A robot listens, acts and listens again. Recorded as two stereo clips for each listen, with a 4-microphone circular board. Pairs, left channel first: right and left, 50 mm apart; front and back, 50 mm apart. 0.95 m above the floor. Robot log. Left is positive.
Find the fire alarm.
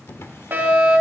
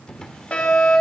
note: The fire alarm: 55° left.
cmd yaw +55
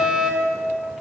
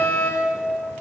note: The fire alarm is now 20° left.
cmd yaw +20
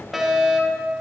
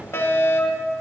end: Found it: a fire alarm, straight ahead.